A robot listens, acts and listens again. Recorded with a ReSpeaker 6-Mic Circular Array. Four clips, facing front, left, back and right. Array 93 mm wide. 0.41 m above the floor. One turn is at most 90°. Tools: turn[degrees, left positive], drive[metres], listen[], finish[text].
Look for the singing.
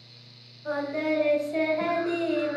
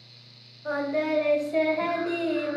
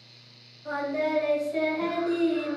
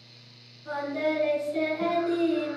Thought: The singing: 40° left.
Action: turn[40]
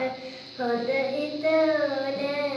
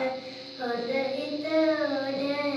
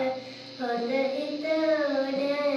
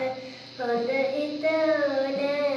Thought: The singing is now 75° right.
Action: turn[-75]
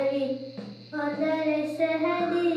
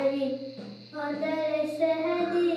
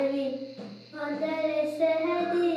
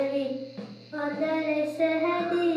Thought: The singing is now 45° right.
Action: turn[-45]
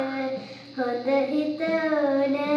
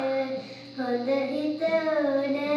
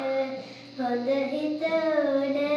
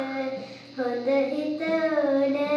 Thought: The singing is now 15° right.
Action: turn[-15]
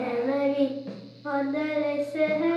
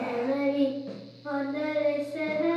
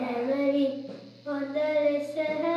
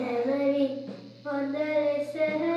Action: finish[Facing the singing.]